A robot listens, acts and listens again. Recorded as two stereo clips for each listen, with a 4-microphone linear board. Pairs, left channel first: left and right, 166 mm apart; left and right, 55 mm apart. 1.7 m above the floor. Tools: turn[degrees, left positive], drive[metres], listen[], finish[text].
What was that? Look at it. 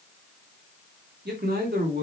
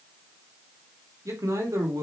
Action: turn[-90]
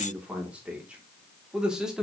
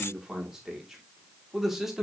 Action: finish[Found it: a man speaking, straight ahead, 2 to 4 m away.]